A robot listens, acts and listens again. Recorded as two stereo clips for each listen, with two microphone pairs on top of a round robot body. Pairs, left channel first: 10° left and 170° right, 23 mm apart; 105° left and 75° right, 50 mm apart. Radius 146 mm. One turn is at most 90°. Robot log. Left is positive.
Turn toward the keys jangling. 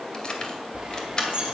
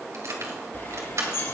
note: The keys jangling: 50° right.
cmd yaw -50
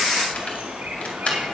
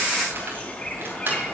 note: The keys jangling is now 25° right.
cmd yaw -25
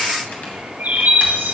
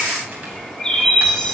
cmd idle
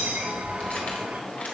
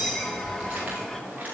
cmd idle
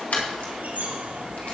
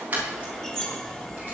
note: The keys jangling is now 15° right.
cmd yaw -15
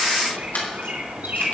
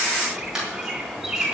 end: Found it: keys jangling, straight ahead, over 4 m away.